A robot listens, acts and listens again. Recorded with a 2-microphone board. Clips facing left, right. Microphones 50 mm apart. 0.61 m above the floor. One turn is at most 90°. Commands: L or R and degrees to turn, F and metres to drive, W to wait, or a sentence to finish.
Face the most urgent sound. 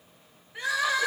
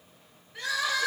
L20
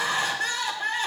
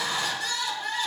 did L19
L90
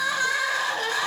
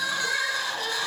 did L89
L55
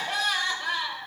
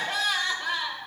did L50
Facing the crying, 1 to 2 m away.